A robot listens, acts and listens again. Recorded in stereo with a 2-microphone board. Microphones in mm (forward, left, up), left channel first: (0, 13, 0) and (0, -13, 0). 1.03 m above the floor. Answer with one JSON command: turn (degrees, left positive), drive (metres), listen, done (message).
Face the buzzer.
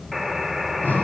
{"turn": 30}
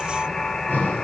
{"turn": 150}
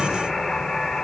{"done": "Facing the buzzer."}